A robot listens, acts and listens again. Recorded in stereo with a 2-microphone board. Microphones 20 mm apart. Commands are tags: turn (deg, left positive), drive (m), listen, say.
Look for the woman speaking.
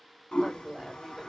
<turn deg="-45"/>
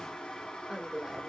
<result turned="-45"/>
<turn deg="-20"/>
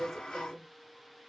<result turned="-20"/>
<turn deg="-15"/>
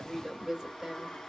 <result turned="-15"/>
<turn deg="-15"/>
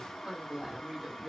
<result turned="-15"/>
<turn deg="-20"/>
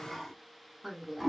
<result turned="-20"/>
<say>Found it: a woman speaking, straight ahead, 1 to 2 m away.</say>